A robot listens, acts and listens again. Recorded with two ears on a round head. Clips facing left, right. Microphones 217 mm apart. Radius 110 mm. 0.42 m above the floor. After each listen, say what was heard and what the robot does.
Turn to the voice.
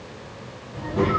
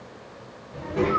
The child speaking: about 40° right or 140° right. Turn 40° right.
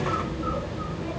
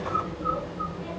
Facing the child speaking.